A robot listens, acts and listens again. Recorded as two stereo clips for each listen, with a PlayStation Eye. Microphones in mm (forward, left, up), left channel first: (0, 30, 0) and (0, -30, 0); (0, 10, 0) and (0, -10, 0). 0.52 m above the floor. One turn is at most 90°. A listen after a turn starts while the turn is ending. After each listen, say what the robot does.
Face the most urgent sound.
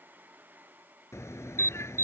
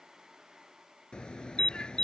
Turn 50° left.
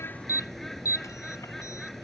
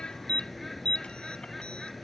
Turn 80° left.
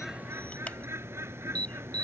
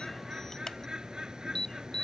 Turn 25° left.
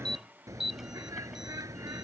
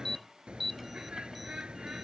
Turn 10° right.
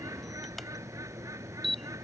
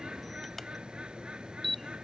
Facing the alarm.